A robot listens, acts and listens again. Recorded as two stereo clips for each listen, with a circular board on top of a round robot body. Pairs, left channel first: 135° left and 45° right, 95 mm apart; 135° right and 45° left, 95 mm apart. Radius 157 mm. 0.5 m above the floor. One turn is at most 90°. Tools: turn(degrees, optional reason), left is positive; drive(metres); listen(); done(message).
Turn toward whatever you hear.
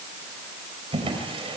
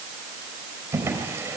turn(degrees=-20, reason="The drawer: 20° right.")
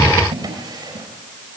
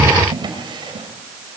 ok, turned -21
done("Facing the drawer.")